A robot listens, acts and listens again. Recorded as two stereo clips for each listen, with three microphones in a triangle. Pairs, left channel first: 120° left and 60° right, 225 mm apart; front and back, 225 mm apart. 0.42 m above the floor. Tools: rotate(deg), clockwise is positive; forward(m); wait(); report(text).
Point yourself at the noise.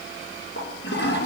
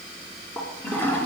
rotate(-85)
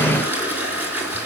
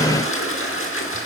rotate(-20)
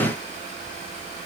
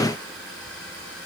wait()
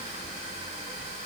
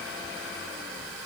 wait()
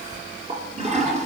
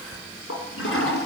report("Found it: a toilet flushing, straight ahead.")